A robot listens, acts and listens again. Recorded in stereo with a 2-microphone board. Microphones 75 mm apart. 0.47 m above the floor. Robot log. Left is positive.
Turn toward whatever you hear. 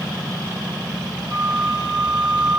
note: The flute: about 70° right or 110° right.
cmd yaw -70
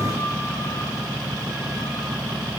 cmd idle
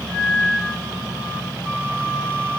note: So it is at 35° right.
cmd yaw -35
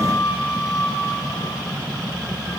end: Facing the flute.